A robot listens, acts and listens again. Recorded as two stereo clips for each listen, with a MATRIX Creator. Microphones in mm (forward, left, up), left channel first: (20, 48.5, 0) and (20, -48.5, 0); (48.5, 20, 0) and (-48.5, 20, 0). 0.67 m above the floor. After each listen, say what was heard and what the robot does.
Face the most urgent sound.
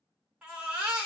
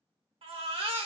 The baby crying: 170° right. Turn 170° right.
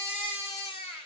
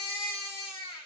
The baby crying is now 20° right. Turn 20° right.
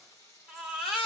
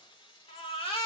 Facing the baby crying, under 1 m away.